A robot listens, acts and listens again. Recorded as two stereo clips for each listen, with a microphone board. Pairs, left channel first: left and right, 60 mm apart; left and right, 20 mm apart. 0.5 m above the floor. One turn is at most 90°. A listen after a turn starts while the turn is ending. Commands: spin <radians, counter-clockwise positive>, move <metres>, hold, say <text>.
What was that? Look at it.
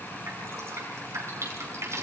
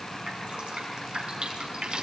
spin -0.87
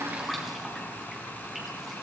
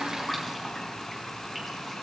say Found it: dripping, straight ahead, over 4 m away.